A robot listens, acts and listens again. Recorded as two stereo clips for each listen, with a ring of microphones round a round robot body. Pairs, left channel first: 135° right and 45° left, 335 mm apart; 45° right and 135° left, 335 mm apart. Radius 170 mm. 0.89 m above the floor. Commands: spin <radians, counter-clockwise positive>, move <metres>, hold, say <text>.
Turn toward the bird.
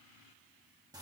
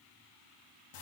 hold
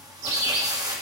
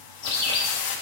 spin 0.26
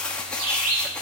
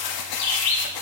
say Found it: a bird, straight ahead.